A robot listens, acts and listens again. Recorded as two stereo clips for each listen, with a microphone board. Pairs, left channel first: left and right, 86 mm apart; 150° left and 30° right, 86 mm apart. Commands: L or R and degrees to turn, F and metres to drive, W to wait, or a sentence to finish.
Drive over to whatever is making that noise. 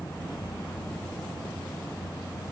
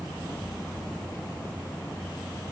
W
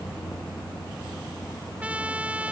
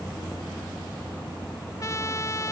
R165
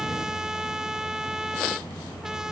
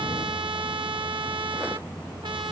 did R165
F1.0
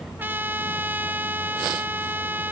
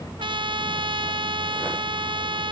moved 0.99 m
R25
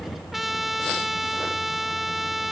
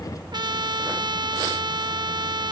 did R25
F1.0
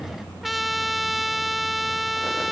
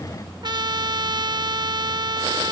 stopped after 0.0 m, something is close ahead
I am next to the trumpet.